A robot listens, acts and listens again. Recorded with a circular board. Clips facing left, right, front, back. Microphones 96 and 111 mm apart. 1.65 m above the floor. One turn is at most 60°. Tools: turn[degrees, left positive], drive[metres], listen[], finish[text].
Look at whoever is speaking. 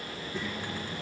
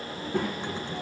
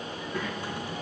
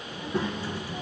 Thought: The child speaking: 120° right.
Action: turn[-60]
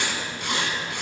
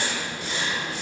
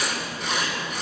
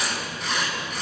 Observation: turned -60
Thought: Nothing new. It was at 60° right.
Action: turn[-60]
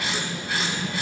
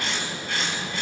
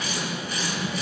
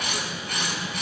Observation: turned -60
Thought: The child speaking is now 10° left.
Action: turn[10]
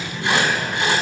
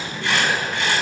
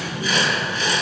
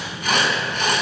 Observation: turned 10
Action: finish[Facing the child speaking, 1 to 2 m away.]